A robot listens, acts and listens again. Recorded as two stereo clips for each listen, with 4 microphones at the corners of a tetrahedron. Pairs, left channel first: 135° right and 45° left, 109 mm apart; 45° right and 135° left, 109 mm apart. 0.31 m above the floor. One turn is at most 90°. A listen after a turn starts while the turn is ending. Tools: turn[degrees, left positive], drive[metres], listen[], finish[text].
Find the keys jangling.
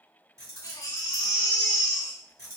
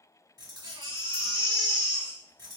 Thought: The keys jangling: 95° left.
Action: turn[90]
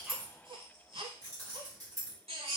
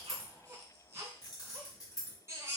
Action: finish[Found it: keys jangling, straight ahead.]